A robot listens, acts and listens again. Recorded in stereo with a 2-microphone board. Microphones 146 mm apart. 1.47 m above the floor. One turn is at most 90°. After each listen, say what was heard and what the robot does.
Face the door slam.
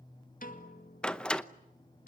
Turn 30° left.
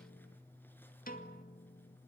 Keep listening.
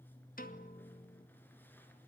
I heard a door slam, but can't make it out now. It was about 25° right or 145° left.